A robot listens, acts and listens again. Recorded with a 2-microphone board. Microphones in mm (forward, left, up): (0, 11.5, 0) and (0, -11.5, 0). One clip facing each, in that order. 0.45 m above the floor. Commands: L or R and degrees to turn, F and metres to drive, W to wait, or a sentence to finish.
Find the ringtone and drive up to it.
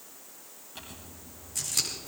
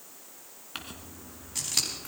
W
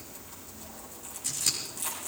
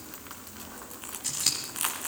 W
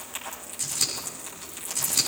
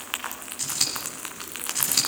I can't make out a ringtone, only scissors and crumpling.